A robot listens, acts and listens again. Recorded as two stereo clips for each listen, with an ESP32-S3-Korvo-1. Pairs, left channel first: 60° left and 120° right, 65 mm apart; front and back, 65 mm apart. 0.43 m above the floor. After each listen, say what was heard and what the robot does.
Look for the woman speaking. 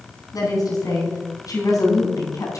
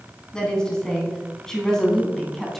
The woman speaking: 85° left. Turn 85° left.
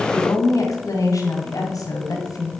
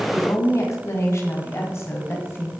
The woman speaking is now 50° left. Turn 50° left.
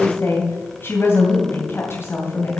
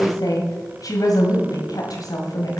The woman speaking is now 10° left. Turn 10° left.
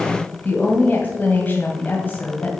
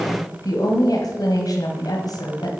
Facing the woman speaking, 2 to 4 m away.